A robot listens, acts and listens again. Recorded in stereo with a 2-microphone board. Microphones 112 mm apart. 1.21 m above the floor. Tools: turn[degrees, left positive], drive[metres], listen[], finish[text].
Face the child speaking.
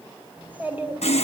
Action: turn[-30]
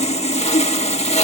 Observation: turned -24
Action: listen[]
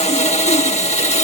Action: listen[]
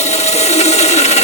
Action: finish[I heard a child speaking, but can't make it out now. It was about 10° left or 140° right.]